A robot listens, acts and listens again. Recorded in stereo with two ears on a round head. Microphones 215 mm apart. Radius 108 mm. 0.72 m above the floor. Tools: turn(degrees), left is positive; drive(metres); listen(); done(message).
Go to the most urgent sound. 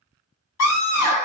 turn(degrees=75)
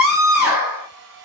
drive(metres=1.0)
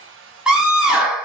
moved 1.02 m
drive(metres=1.0)
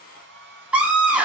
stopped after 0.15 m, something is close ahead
done("Arrived at the scream, straight ahead.")